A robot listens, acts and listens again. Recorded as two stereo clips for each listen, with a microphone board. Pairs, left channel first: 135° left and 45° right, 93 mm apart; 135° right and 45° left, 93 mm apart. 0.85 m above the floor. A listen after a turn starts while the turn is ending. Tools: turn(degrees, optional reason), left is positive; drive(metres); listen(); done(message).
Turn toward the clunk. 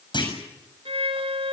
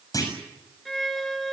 turn(degrees=170, reason="The clunk: 170° left.")
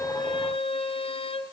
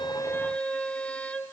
done("Facing where the clunk came from. I can't hear it now.")